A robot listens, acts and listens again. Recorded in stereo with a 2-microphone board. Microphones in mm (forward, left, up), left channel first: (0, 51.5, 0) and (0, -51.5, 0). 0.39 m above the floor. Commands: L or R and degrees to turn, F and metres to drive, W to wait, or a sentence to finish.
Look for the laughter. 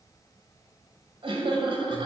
R55
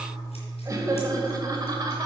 R40
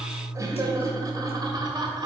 R45
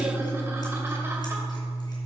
W
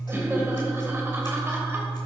R25
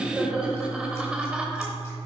R10
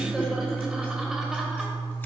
Facing the laughter.